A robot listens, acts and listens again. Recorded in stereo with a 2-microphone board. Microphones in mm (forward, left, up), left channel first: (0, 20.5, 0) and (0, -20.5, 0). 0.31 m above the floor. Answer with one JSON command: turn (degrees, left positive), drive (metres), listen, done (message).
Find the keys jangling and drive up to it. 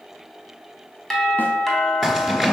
{"turn": 30}
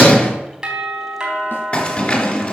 {"turn": 145}
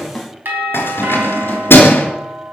{"turn": 65}
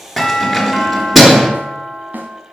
{"drive": 1.0}
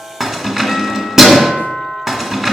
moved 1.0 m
{"turn": -10}
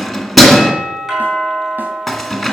{"drive": 1.0}
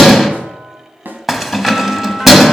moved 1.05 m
{"drive": 1.0}
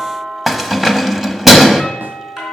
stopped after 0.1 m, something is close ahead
{"done": "Arrived at the keys jangling, straight ahead."}